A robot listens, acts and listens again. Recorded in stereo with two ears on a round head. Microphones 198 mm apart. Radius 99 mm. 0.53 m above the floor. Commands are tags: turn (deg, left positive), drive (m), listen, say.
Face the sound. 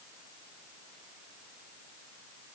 <listen/>
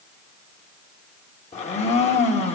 <turn deg="30"/>
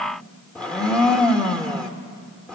<say>Found it: a blender, straight ahead.</say>